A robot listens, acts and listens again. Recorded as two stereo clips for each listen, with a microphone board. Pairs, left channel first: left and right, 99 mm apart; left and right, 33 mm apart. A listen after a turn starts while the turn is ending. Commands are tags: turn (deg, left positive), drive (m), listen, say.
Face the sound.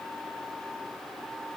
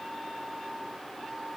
<listen/>
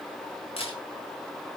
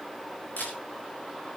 <turn deg="75"/>
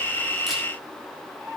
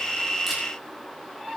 <listen/>
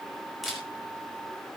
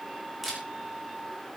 <say>Facing the camera shutter.</say>